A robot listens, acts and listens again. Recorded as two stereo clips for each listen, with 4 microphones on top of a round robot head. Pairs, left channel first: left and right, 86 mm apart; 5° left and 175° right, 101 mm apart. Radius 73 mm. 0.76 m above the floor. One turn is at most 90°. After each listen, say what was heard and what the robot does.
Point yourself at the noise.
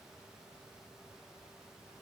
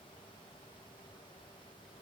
Keep listening.
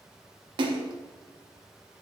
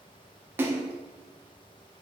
The splash: 105° right. Turn 90° right.
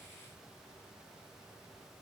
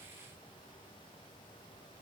Nothing new. It was at 15° right. Turn 15° right.
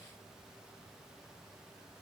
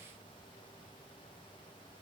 I heard a splash from this way, but can't make it out now.